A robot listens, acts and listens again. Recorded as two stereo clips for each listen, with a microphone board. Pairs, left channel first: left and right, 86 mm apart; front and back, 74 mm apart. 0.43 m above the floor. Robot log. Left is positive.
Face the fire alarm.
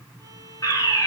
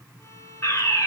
note: The fire alarm: 40° left.
cmd yaw +40
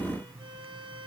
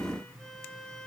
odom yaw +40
cmd idle
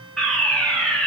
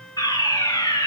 end: Found it: a fire alarm, straight ahead.